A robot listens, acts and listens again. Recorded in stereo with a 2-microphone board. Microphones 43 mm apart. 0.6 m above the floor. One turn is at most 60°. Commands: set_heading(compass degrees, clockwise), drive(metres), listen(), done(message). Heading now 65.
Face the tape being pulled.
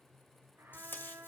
set_heading(10)
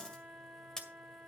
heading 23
set_heading(8)
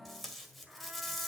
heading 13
done("Facing the tape being pulled.")